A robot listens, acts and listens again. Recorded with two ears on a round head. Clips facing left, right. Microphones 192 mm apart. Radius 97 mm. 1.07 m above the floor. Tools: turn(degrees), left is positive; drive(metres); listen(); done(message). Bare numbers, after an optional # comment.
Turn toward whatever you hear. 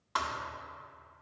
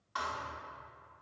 # The thud: about 70° left or 110° left.
turn(70)
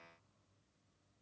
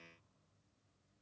listen()
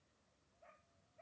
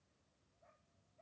done("I heard a thud, but can't make it out now. It was about straight ahead or 40° left.")